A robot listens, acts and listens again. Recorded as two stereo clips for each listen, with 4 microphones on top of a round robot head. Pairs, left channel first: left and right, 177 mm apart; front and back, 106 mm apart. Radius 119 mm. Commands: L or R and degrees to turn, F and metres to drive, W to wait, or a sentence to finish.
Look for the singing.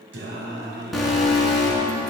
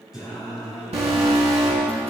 R95
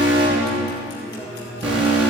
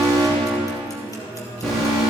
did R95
R10
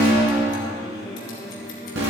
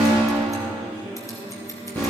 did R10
Facing the singing, over 4 m away.